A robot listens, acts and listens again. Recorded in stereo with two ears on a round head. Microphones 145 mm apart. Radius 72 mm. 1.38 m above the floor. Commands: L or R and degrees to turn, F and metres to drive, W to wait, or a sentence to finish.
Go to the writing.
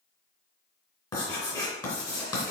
L20
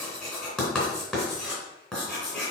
F1.0
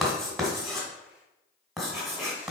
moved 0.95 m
F1.0
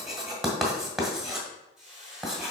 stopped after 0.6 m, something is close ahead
Arrived at the writing, straight ahead.